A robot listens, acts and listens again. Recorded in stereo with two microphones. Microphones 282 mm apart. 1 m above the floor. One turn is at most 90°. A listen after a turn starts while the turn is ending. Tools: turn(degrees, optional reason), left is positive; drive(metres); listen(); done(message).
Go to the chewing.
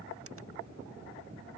listen()
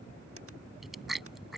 turn(degrees=30)
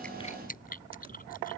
turn(degrees=90, reason="So it is at 150° left.")
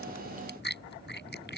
turn(degrees=40, reason="The chewing is now 40° left.")
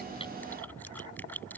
drive(metres=1.0)
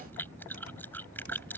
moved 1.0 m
drive(metres=1.0)
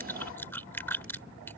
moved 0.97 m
turn(degrees=10, reason="The chewing is now 10° left.")
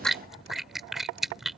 drive(metres=1.0)
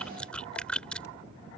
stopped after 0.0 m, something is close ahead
done("I am next to the chewing.")